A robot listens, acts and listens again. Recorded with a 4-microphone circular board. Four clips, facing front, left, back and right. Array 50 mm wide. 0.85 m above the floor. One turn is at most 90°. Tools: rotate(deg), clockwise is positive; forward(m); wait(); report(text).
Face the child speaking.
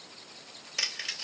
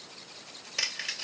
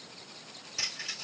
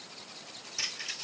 wait()
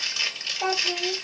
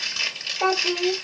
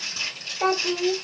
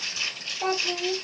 rotate(-90)
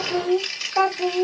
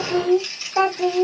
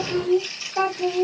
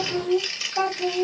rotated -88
rotate(-60)
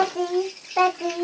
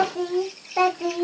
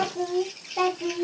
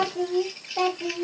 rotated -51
rotate(-35)
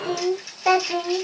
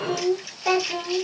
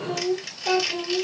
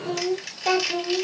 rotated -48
report("Facing the child speaking, 1 to 2 m away.")